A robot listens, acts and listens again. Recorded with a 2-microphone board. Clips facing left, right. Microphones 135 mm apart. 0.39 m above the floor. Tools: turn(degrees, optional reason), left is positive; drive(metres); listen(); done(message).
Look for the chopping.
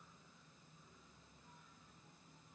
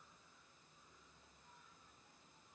listen()
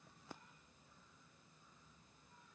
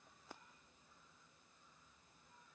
listen()
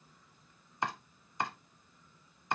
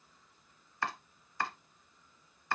turn(degrees=20, reason="The chopping: about 20° left or 160° left.")
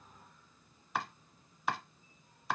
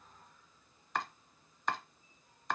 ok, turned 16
done("Facing the chopping, under 1 m away.")